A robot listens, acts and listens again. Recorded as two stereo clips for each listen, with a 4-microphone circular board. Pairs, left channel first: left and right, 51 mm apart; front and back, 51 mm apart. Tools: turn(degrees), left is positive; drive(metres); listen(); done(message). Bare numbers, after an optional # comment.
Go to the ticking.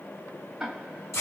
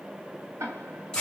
# The ticking: 170° right.
turn(-170)
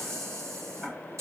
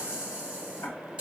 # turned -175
drive(1.0)
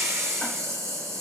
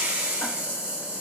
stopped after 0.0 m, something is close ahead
listen()
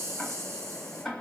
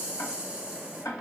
done("Something is in my way. I am facing the ticking but have not reached it.")